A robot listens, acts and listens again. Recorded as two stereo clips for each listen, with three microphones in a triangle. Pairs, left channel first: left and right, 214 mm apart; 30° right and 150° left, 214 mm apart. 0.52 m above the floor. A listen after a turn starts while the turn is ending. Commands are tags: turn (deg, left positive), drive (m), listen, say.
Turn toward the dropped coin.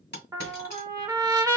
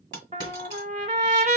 <turn deg="120"/>
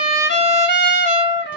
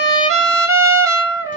<say>Facing where the dropped coin came from. I can't hear it now.</say>